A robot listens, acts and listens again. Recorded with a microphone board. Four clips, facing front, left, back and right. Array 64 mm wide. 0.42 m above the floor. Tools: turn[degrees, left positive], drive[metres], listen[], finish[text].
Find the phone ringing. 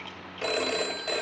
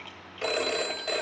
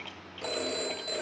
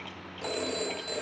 Thought: The phone ringing: 55° left.
Action: turn[55]
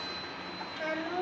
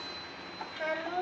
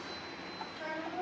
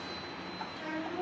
Action: listen[]
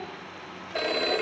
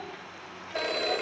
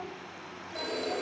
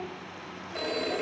Thought: The phone ringing is now 25° left.
Action: turn[25]
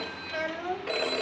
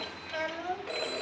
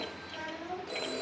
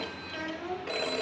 Thought: The phone ringing is now 10° right.
Action: turn[-10]
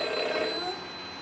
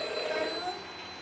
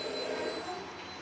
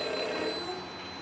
Action: finish[Facing the phone ringing.]